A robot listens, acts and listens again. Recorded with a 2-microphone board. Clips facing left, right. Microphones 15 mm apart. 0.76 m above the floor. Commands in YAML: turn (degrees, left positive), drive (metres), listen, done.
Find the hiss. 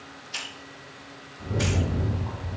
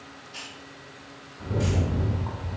turn: 65
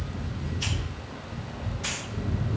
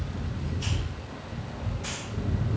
listen: true
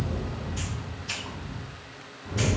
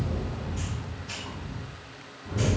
listen: true
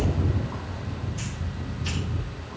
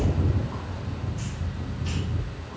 done: "I heard a hiss, but can't make it out now. It was about straight ahead or 50° left."